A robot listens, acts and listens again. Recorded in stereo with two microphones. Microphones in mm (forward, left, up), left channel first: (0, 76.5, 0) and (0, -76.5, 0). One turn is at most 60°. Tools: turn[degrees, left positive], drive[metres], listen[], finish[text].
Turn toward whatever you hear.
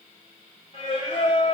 Thought: The singing: about 35° left or 145° left.
Action: turn[35]
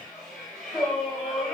Action: finish[Facing the singing, 1 to 2 m away.]